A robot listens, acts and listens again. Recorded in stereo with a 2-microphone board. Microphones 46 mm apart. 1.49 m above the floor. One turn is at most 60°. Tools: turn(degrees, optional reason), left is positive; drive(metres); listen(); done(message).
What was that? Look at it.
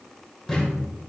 turn(degrees=30)
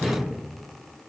turn(degrees=-15, reason="So it is at 15° right.")
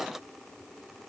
done("I heard a thud from this way, but can't make it out now.")